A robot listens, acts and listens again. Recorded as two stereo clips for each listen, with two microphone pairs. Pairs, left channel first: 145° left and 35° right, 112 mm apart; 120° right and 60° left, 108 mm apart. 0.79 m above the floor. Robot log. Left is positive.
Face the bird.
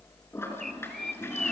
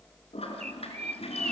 note: The bird: 60° left.
cmd yaw +60
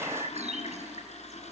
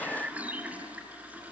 note: The bird is now 20° right.
cmd yaw -20
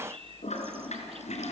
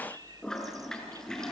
cmd idle
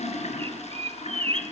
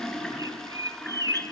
end: Found it: a bird, straight ahead.